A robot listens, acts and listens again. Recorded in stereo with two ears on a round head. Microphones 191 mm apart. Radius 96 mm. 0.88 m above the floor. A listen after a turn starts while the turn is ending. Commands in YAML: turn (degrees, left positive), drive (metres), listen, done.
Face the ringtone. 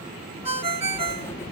turn: -30
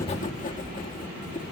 listen: true
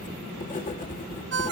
turn: -125
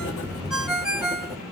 done: "Found it: a ringtone, straight ahead, 1 to 2 m away."